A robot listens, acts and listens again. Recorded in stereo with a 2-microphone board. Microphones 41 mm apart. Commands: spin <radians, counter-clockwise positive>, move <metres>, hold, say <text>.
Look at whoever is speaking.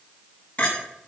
hold
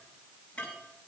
hold
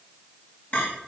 say I can't make out anyone speaking to turn to.